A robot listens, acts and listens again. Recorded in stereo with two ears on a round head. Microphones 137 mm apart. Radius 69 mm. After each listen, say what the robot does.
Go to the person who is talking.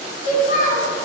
Turn 55° left.
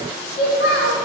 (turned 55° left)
Turn 70° left.
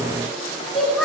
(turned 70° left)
Drive 1.0 m forward.
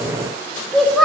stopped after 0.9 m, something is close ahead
Arrived at the child speaking, straight ahead.